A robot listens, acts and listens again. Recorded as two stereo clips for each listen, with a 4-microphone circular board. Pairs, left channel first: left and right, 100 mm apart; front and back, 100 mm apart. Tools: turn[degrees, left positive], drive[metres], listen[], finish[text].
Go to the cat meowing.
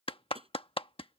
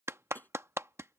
Action: listen[]
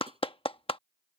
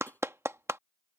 Action: listen[]
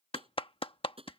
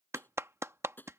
Action: finish[I can't make out a cat meowing, only tapping and a clap.]